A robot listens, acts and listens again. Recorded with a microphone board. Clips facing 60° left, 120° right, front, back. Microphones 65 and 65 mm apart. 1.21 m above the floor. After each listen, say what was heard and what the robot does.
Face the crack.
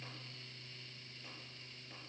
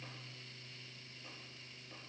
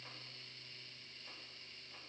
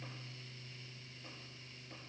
Keep listening.
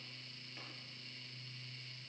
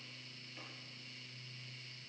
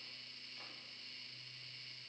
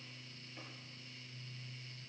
Keep listening.
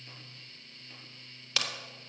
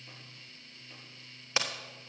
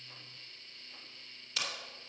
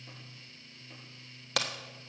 The crack: 175° left. Turn 175° left.
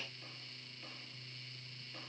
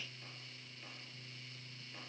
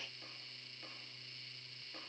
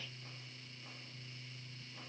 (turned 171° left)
I heard a crack from this way, but can't make it out now.